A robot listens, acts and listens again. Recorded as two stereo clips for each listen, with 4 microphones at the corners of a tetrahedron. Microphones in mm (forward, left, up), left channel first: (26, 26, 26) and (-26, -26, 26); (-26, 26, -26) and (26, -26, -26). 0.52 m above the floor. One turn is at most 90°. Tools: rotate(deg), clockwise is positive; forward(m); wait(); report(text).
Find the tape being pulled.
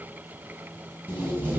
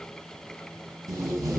rotate(75)
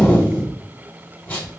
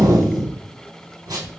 rotate(25)
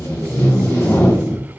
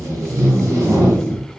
report("Facing the tape being pulled.")